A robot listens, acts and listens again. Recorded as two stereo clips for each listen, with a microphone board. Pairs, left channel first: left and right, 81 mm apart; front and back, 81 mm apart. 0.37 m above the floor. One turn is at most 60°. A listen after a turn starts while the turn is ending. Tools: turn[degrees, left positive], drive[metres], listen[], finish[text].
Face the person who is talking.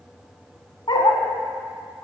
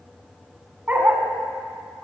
Action: listen[]
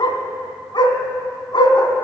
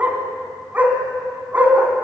Action: listen[]
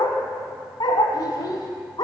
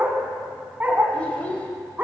Thought: The child speaking: 70° left.
Action: turn[60]
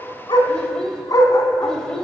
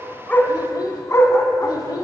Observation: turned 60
Thought: The child speaking is now 10° left.
Action: turn[10]
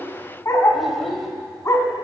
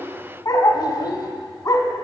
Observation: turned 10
Action: finish[Found it: a child speaking, straight ahead, under 1 m away.]